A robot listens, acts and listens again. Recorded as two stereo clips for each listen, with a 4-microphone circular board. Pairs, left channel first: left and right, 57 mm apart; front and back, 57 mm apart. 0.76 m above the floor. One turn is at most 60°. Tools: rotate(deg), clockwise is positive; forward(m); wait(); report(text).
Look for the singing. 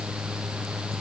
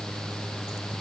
wait()
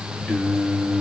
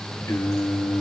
report("Facing the singing, 1 to 2 m away.")